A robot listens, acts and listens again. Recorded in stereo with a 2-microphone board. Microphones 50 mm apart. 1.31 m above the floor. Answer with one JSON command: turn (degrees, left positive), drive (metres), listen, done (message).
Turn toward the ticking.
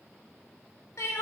{"listen": true}
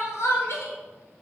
{"listen": true}
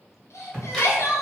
{"turn": 30}
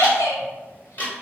{"turn": 145}
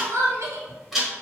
{"done": "Facing the ticking, 1 to 2 m away."}